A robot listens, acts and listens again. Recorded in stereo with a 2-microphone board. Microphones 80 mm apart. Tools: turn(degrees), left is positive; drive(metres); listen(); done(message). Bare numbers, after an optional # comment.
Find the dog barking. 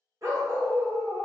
# The dog barking: about 45° right or 135° right.
turn(-45)
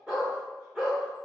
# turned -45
# So it is at 10° right.
turn(-10)
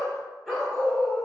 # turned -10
done("Found it: a dog barking, straight ahead.")